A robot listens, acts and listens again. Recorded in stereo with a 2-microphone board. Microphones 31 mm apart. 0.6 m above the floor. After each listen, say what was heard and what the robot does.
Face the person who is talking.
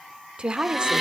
The woman speaking: about 30° right or 150° right. Turn 30° right.
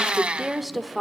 Facing the woman speaking, 1 to 2 m away.